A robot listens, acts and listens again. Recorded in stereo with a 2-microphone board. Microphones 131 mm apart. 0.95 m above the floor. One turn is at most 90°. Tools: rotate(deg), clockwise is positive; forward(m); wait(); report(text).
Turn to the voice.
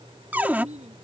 rotate(60)
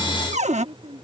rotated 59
rotate(55)
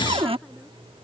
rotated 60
wait()
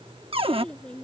report("Facing the child speaking.")